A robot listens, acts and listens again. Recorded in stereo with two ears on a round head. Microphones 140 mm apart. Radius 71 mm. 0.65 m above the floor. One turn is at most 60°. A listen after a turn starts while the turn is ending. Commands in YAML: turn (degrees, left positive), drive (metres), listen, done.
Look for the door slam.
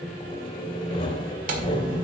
turn: -60
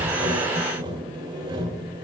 listen: true
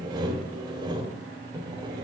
done: "I heard a door slam, but can't make it out now. It was about straight ahead or 60° right."